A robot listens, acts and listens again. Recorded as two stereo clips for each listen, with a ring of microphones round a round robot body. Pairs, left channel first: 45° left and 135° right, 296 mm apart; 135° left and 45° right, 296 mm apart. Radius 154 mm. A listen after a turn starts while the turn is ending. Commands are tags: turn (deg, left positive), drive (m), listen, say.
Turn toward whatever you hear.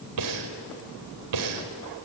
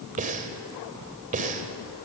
<turn deg="-110"/>
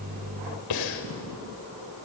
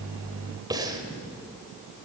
<turn deg="30"/>
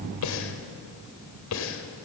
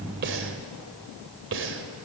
<say>Facing the breathing, 2 to 4 m away.</say>